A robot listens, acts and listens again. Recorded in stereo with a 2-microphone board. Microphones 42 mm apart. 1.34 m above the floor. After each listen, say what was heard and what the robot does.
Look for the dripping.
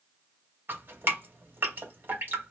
The dripping: about 60° right or 120° right. Turn 60° right.
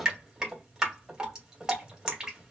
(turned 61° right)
So it is at 20° right. Turn 20° right.
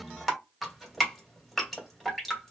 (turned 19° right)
Facing the dripping.